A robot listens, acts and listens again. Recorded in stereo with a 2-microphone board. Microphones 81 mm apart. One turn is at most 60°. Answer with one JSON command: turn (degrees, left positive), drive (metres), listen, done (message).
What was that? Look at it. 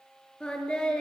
{"turn": 30}
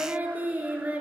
{"turn": -20}
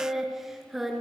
{"done": "Found it: singing, straight ahead, 2 to 4 m away."}